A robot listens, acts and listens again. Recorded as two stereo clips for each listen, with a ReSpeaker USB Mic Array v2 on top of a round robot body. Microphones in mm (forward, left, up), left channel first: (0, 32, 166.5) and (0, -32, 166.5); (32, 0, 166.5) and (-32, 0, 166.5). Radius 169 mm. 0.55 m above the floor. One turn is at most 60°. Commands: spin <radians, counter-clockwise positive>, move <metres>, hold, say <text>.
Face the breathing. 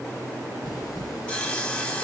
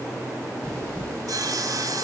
spin 1.05
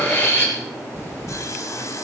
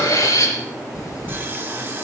spin 0.52
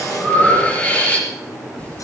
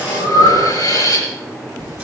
spin 0.35
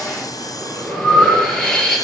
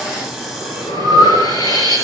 say Facing the breathing.